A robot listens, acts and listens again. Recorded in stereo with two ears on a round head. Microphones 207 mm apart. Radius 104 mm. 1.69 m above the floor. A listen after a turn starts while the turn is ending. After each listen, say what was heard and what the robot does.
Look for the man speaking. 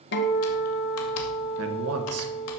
The man speaking: about 70° right or 110° right. Turn 70° right.
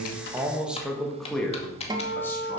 Facing the man speaking.